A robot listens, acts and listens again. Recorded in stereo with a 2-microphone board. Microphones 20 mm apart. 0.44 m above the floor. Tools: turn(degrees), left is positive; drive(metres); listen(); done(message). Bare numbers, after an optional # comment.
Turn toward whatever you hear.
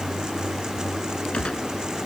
# The gunshot: about 65° left or 115° left.
turn(65)
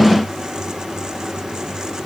listen()
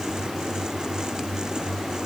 done("I heard a gunshot, but can't make it out now. It was about straight ahead or 50° left.")